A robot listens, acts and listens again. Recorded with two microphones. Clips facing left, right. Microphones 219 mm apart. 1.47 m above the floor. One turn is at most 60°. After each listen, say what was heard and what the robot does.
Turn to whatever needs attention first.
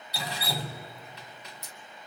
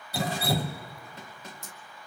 Keep listening.
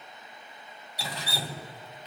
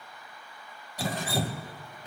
Keep listening.
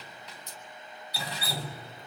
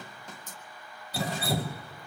I can't make out anything urgent, only dripping.